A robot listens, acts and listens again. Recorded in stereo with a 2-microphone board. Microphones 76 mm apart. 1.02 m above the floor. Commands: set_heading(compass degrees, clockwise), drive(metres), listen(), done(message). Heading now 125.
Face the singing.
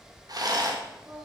set_heading(185)
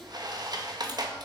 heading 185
listen()
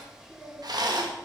set_heading(205)
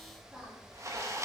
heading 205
set_heading(215)
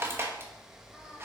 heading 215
set_heading(230)
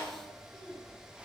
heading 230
done("Found it: singing, straight ahead.")